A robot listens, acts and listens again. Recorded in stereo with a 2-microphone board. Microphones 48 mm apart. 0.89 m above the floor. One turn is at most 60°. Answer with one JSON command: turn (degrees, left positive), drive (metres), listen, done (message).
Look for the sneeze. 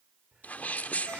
{"turn": 35}
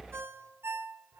{"listen": true}
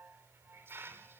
{"done": "I heard a sneeze, but can't make it out now. It was about straight ahead or 110° left."}